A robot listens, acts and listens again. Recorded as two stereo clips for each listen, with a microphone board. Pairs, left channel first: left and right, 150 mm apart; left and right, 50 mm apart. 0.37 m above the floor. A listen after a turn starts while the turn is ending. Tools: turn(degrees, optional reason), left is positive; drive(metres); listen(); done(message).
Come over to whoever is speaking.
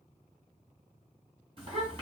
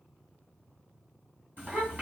turn(degrees=-40, reason="The child speaking: about 40° right or 140° right.")
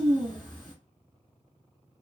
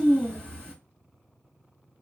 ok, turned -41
turn(degrees=-95, reason="So it is at 95° right.")
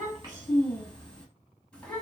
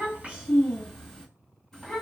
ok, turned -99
drive(metres=1.0)
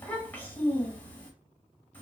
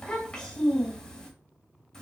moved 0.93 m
turn(degrees=15, reason="The child speaking is now 15° left.")
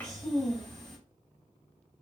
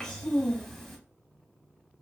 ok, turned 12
drive(metres=1.0)
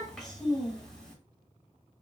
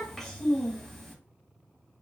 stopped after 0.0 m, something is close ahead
done("Arrived at the child speaking, straight ahead.")